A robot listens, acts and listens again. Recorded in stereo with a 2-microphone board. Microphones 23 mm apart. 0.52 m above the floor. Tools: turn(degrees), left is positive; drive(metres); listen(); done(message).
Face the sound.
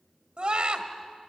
turn(degrees=-50)
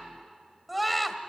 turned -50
done("Facing the scream.")